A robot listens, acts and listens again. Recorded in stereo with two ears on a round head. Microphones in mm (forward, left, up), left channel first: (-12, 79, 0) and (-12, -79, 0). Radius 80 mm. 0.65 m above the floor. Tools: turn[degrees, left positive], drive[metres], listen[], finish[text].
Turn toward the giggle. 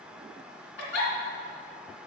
Action: turn[90]
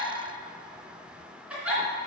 Action: finish[Found it: a giggle, straight ahead.]